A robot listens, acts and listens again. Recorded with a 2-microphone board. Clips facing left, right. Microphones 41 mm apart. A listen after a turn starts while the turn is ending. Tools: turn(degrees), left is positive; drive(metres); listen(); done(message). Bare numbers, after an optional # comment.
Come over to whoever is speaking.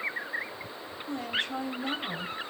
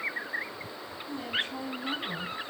# The woman speaking: about 65° left or 115° left.
turn(65)
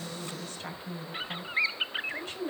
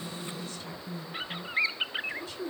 # So it is at 45° left.
turn(45)
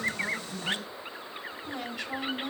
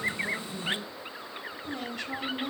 drive(1.0)
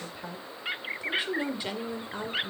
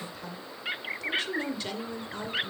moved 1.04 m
# The woman speaking is now 15° left.
turn(15)
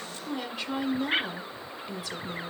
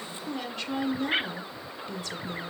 drive(1.0)
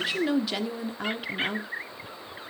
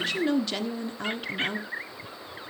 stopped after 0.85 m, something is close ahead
# The woman speaking is now 10° left.
turn(10)
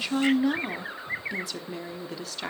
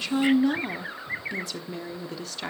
done("Arrived at the woman speaking, straight ahead.")